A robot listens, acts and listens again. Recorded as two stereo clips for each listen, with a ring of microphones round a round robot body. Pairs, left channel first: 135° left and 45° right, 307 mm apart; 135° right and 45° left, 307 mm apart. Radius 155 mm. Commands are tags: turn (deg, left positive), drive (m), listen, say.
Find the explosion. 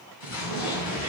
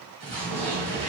<turn deg="115"/>
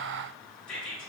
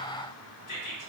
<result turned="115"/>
<say>Facing where the explosion came from. I can't hear it now.</say>